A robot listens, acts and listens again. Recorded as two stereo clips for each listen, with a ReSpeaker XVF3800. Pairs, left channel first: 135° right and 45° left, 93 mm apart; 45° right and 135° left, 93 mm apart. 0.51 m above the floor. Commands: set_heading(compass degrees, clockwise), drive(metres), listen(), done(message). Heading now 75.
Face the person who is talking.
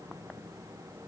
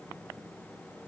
listen()
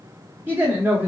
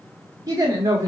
set_heading(325)
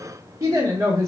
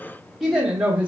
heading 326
set_heading(256)
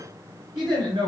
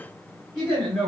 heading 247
set_heading(222)
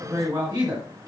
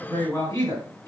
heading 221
done("Found it: a woman speaking, straight ahead, 1 to 2 m away.")